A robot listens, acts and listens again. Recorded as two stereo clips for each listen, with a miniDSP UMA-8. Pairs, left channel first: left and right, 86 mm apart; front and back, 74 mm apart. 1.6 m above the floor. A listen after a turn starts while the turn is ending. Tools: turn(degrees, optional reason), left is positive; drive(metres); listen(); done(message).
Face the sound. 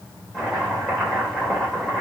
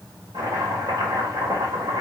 turn(degrees=175, reason="The chopping: 175° left.")
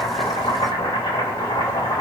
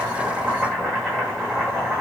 turn(degrees=90, reason="The chopping is now 90° left.")
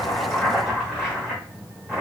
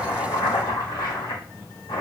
done("Facing the chopping, 1 to 2 m away.")